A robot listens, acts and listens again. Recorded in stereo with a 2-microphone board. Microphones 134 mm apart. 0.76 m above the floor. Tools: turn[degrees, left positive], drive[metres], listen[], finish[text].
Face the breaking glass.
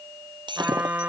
Thought: The breaking glass: about 35° right or 145° right.
Action: turn[-35]
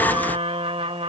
Action: listen[]
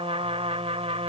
Action: finish[I heard breaking glass, but can't make it out now. It was about straight ahead or 110° right.]